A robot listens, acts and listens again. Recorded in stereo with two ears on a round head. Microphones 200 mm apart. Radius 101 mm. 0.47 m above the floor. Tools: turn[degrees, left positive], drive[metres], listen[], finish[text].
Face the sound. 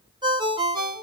Thought: The ringtone: about 20° right or 160° right.
Action: turn[-20]
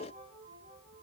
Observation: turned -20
Action: listen[]
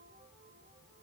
Action: listen[]
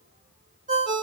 Thought: So it is at 135° right.
Action: turn[-135]
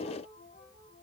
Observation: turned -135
Action: listen[]
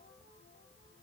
Action: listen[]
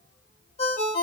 Thought: The ringtone is now 30° left.
Action: turn[30]
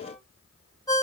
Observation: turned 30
Thought: The ringtone is now 20° left.
Action: turn[20]
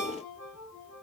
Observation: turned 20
Action: finish[Found it: a ringtone, straight ahead, 1 to 2 m away.]